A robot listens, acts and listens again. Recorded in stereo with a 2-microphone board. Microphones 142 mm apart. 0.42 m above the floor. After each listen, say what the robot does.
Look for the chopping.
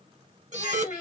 Keep listening.
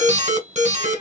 Keep listening.
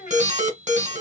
I can't make out chopping to turn to.